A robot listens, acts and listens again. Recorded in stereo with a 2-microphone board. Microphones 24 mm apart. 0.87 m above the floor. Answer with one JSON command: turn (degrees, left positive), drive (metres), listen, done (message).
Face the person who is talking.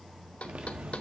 {"listen": true}
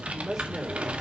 {"turn": -20}
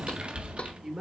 {"turn": -140}
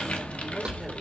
{"listen": true}
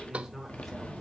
{"done": "Facing the woman speaking, 2 to 4 m away."}